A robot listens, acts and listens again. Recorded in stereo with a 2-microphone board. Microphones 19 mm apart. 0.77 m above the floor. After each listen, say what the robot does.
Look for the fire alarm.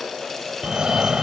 Turn 35° right.
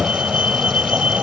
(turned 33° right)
Turn 110° right.
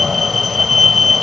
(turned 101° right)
Turn 10° right.
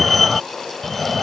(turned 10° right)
Found it: a fire alarm, straight ahead.